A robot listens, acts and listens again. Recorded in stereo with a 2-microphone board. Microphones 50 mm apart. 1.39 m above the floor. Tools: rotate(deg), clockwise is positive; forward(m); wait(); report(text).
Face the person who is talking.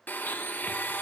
wait()
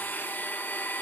wait()
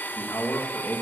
rotate(-90)
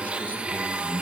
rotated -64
rotate(-35)
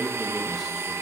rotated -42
report("Found it: a man speaking, straight ahead.")